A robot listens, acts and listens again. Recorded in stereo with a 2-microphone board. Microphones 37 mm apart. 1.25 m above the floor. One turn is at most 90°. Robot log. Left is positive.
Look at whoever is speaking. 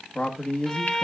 note: The man speaking: about 30° left or 150° left.
cmd yaw +30
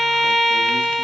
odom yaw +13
cmd idle
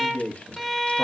note: So it is at 140° left.
cmd yaw +90
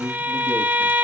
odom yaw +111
note: The man speaking is now 25° left.
cmd yaw +25
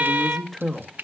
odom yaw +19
end: Facing the man speaking.